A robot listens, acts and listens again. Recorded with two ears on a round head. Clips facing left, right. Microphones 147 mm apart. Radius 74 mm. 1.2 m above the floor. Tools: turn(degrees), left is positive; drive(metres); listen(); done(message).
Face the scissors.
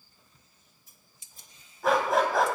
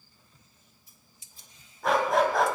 turn(degrees=40)
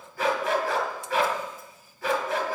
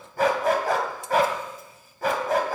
listen()
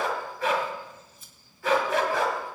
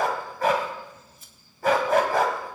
turn(degrees=95)
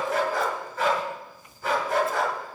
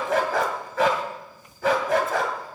listen()
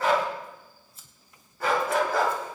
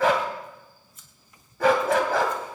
turn(degrees=30)
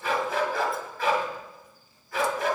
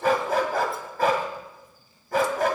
listen()
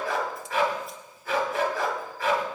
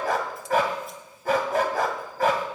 listen()
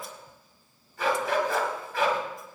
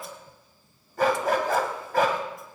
done("Facing where the scissors came from. I can't hear it now.")